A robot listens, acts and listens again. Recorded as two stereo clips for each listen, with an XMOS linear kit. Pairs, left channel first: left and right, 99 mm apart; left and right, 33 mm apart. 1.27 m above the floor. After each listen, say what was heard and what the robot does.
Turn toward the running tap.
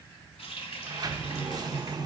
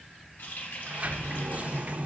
Turn 90° left.
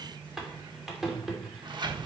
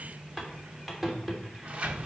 Found it: a running tap, straight ahead.